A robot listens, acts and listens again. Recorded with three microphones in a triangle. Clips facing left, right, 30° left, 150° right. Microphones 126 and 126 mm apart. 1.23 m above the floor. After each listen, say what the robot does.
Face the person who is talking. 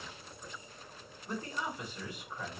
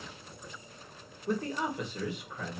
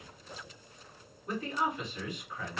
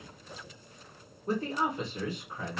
Turn 95° right.
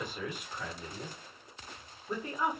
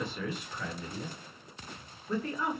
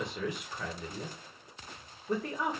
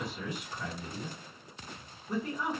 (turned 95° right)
Turn 15° left.
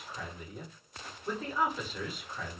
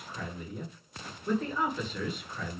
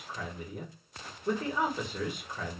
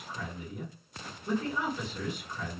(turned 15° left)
Found it: a man speaking, straight ahead, 1 to 2 m away.